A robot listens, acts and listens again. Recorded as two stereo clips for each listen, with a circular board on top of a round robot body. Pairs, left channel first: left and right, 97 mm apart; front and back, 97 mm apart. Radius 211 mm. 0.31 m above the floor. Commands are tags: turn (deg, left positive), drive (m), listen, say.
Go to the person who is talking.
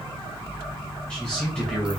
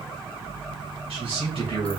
<turn deg="170"/>
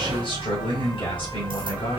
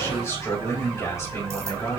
<turn deg="60"/>
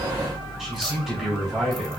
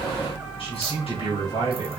<drive m="1.0"/>
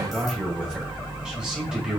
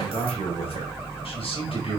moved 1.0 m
<turn deg="-10"/>
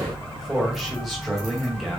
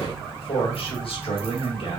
<drive m="1.0"/>
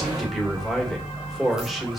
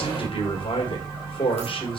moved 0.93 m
<drive m="1.0"/>
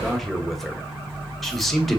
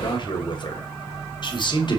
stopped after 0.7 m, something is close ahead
<say>I am next to the man speaking.</say>